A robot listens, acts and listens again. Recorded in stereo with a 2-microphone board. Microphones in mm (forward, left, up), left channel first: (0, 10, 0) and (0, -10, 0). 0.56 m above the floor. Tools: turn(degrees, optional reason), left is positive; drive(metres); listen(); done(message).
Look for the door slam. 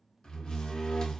turn(degrees=35, reason="The door slam: about 35° left or 145° left.")
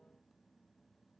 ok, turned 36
listen()
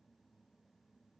done("I heard a door slam, but can't make it out now. It was about straight ahead or 110° left.")